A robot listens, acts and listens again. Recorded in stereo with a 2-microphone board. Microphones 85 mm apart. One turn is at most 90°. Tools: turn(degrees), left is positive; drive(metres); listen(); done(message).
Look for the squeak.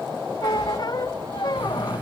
turn(degrees=55)
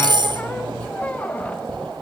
listen()
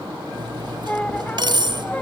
turn(degrees=20)
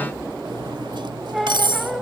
done("Found it: a squeak, straight ahead, under 1 m away.")